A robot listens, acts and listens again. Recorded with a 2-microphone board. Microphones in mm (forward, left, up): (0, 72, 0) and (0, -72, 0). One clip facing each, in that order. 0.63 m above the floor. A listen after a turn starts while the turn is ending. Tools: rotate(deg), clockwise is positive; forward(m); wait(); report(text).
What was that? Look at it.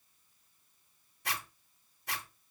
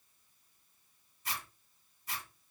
rotate(-70)
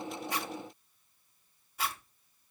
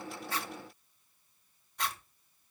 report("Facing the zipper, 1 to 2 m away.")